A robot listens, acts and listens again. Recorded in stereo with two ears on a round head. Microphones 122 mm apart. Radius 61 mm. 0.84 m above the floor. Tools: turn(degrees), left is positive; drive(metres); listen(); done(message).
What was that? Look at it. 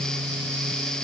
listen()
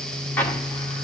turn(degrees=30)
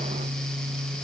listen()
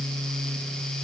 done("I heard an explosion, but can't make it out now. It was about 15° right or 135° left.")